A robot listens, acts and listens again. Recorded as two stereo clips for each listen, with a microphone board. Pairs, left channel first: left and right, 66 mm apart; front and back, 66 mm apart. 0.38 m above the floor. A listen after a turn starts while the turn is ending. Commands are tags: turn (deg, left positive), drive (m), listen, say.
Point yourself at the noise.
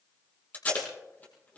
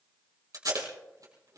<turn deg="155"/>
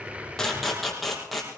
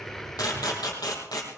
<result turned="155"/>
<say>Found it: tape being pulled, straight ahead, over 4 m away.</say>